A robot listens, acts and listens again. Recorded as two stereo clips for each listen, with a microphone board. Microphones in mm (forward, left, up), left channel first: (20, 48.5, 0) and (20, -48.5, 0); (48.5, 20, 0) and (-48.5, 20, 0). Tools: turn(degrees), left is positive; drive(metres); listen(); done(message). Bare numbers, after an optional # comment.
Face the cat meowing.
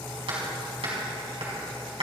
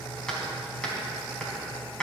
listen()
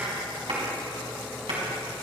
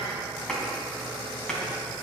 listen()
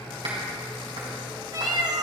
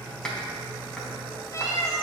# The cat meowing: 55° right.
turn(-55)
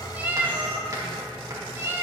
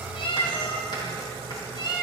# The cat meowing is now 30° right.
turn(-30)
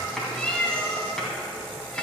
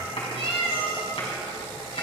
# The cat meowing is now 10° left.
turn(10)
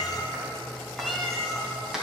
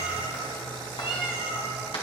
done("Found it: a cat meowing, straight ahead, 2 to 4 m away.")